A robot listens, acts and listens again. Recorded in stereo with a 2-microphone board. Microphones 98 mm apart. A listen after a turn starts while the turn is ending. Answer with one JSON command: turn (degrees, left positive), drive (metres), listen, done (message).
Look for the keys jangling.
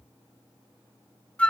{"listen": true}
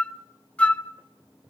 {"listen": true}
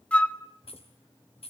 {"turn": 90}
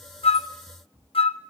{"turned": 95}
{"listen": true}
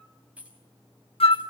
{"turn": -15}
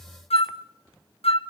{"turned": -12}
{"listen": true}
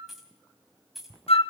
{"done": "Found it: keys jangling, straight ahead, over 4 m away."}